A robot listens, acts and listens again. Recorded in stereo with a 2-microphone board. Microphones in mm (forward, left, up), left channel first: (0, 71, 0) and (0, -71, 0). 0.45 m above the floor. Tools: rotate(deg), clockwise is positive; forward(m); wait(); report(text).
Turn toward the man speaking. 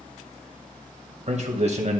rotate(50)
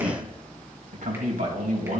rotate(70)
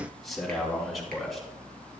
report("Found it: a man speaking, straight ahead.")